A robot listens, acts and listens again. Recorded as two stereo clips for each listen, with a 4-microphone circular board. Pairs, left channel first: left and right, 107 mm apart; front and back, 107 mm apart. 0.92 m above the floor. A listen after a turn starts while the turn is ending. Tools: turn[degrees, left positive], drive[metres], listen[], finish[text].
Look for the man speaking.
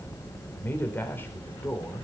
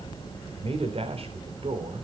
Thought: The man speaking: 160° left.
Action: turn[160]
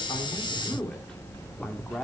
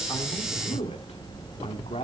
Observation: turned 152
Action: finish[Found it: a man speaking, straight ahead.]